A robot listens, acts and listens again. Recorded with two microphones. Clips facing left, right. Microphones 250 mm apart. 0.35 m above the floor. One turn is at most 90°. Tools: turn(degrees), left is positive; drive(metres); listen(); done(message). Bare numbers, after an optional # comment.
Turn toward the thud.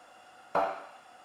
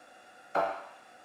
# The thud: about 65° left or 115° left.
turn(65)
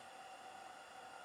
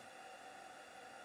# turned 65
listen()
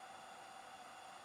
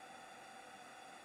done("I heard a thud, but can't make it out now. It was about straight ahead or 50° left.")